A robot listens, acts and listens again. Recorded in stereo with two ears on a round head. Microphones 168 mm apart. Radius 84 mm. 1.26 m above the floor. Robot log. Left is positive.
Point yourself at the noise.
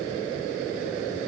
cmd idle
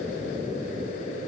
cmd idle
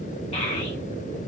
note: The child speaking: about 35° left or 145° left.
cmd yaw +35
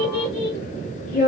note: So it is at 105° left.
cmd yaw +105
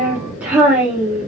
note: The child speaking is now 10° right.
cmd yaw -10
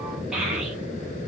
end: Facing the child speaking.